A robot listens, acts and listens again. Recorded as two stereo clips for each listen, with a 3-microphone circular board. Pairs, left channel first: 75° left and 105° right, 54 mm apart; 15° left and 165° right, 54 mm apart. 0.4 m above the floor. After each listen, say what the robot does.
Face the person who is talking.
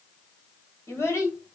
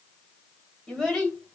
Turn 95° left.
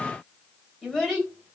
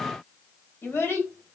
Turn 10° right.
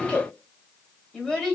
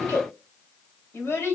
Found it: a child speaking, straight ahead, 1 to 2 m away.